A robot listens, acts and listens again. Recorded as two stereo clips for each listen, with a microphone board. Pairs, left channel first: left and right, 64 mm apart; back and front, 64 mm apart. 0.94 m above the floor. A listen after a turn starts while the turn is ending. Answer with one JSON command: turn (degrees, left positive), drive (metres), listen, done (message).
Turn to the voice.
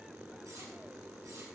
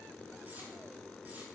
{"listen": true}
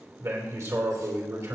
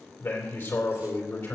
{"turn": -125}
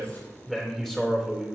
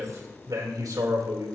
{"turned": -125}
{"done": "Facing the man speaking, 2 to 4 m away."}